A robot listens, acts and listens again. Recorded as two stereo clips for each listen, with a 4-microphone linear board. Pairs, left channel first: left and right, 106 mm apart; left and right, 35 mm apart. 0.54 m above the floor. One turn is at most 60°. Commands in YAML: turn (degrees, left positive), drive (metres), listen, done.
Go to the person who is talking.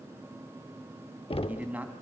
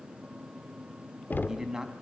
turn: -30
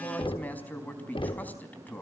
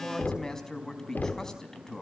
turn: 15
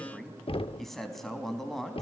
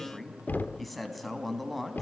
drive: 1.0
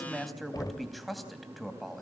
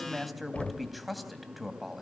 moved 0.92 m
drive: 1.0
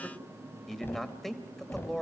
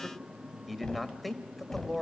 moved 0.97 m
drive: 1.0
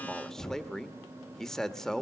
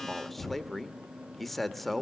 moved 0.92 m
drive: 1.0
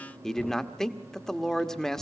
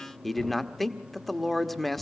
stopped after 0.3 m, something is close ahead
done: "Arrived at the man speaking, straight ahead."